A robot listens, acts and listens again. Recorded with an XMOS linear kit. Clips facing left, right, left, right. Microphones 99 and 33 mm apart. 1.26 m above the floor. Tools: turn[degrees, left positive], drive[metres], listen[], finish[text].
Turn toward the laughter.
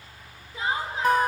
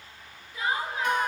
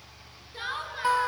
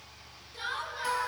Thought: The laughter: about 25° left or 155° left.
Action: turn[25]
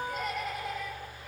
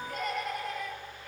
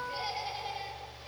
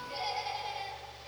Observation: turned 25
Action: finish[Facing the laughter.]